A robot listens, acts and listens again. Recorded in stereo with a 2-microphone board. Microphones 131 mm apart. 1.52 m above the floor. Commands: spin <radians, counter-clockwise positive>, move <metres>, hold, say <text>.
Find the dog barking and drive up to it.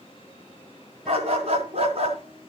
spin -0.87
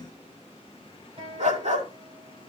spin -1.31
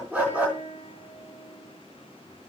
spin -0.17
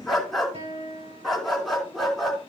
move 1.0
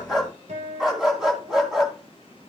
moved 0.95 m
move 1.0
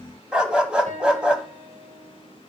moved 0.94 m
spin -0.17
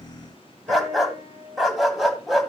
move 1.0
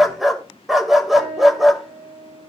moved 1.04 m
move 1.0
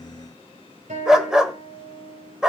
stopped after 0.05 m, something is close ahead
say I am next to the dog barking.